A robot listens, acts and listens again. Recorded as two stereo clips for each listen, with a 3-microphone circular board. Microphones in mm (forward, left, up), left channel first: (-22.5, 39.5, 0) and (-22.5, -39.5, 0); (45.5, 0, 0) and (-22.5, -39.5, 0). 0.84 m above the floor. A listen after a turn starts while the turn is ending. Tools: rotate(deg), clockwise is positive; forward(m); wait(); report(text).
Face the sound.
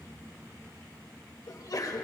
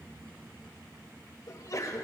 rotate(-65)
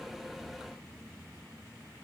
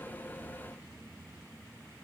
report("I heard a sneeze from this way, but can't make it out now.")